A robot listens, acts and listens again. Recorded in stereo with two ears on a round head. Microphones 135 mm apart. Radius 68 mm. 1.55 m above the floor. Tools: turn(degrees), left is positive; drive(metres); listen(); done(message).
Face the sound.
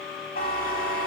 turn(degrees=70)
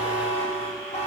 turn(degrees=45)
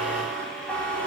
turn(degrees=10)
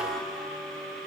done("Found it: a buzzer, straight ahead.")